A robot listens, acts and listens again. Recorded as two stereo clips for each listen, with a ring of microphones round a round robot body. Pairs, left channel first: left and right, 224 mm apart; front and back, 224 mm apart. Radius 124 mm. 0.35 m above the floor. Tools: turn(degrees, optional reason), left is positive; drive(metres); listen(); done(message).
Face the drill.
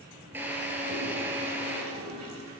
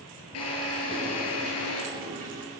turn(degrees=-10, reason="The drill: 10° right.")
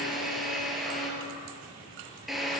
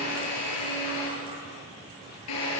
done("Found it: a drill, straight ahead, over 4 m away.")